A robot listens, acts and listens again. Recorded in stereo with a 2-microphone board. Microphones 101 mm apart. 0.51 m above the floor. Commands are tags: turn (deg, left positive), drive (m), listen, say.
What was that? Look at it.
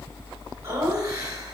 <turn deg="-35"/>
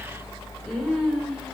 <say>Facing the laughter, over 4 m away.</say>